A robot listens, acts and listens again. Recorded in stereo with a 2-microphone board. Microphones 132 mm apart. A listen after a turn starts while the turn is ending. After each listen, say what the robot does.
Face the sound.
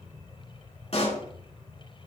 Turn 55° left.
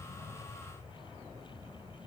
Keep listening.
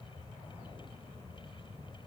I heard a pop, but can't make it out now. It was about straight ahead or 70° left.